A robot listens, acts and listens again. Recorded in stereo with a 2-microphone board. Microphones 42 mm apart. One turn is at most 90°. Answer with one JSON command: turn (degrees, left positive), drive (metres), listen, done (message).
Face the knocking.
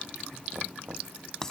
{"turn": -60}
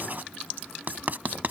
{"listen": true}
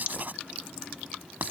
{"listen": true}
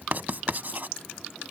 {"done": "I heard knocking, but can't make it out now. It was about straight ahead or 60° right."}